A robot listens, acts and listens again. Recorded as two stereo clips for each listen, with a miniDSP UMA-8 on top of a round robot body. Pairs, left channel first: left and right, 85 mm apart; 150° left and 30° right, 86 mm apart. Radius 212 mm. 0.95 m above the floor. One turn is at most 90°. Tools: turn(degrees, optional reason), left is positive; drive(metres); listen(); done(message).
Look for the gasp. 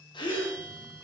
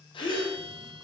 turn(degrees=90, reason="The gasp: 125° left.")
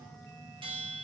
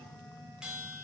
turn(degrees=35, reason="Nothing new. It was at 35° left.")
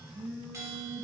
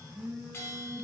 done("I heard a gasp from this way, but can't make it out now.")